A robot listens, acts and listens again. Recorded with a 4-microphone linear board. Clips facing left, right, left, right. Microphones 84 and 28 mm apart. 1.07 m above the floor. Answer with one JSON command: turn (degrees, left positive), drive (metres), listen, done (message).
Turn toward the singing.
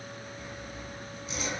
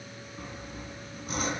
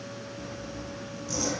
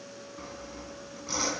{"listen": true}
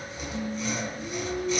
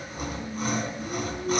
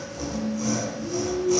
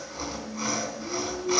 {"turn": 75}
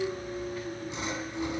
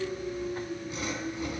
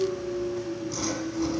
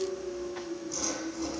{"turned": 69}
{"turn": 40}
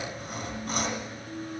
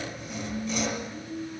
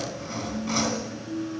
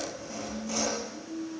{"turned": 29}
{"turn": 15}
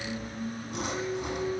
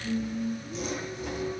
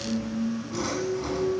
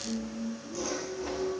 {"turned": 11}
{"done": "Facing the singing, over 4 m away."}